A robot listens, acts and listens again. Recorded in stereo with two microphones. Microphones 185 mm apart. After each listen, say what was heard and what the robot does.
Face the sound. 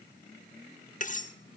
The cutlery clinking: about 45° left or 135° left. Turn 45° left.
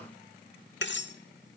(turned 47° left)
So it is at 85° left. Turn 85° left.
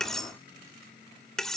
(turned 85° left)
Found it: cutlery clinking, straight ahead.